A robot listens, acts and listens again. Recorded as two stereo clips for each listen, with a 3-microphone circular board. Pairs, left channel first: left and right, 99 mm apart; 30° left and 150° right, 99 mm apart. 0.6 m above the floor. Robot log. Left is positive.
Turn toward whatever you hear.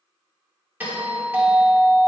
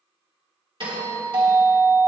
note: The doorbell: 160° right.
cmd yaw -160
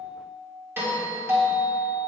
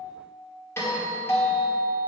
note: The doorbell is now 25° right.
cmd yaw -25
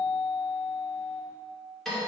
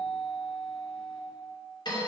end: Facing the doorbell, 1 to 2 m away.